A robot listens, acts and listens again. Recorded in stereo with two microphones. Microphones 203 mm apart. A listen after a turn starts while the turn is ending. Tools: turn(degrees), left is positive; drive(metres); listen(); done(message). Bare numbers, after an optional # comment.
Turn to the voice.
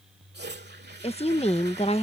# The woman speaking: about 30° left or 150° left.
turn(30)
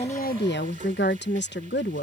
# So it is at 120° left.
turn(120)
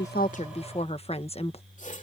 # The woman speaking is now 30° left.
turn(30)
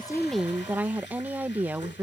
# The woman speaking is now 10° right.
turn(-10)
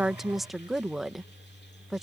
done("Facing the woman speaking.")